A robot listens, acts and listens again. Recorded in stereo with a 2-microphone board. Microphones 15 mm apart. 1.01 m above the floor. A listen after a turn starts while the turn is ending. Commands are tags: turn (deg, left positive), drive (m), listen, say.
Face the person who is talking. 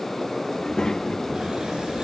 <turn deg="55"/>
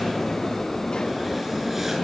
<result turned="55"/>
<turn deg="70"/>
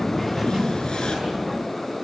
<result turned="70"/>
<turn deg="-25"/>
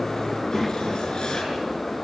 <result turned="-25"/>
<say>Facing the child speaking, 1 to 2 m away.</say>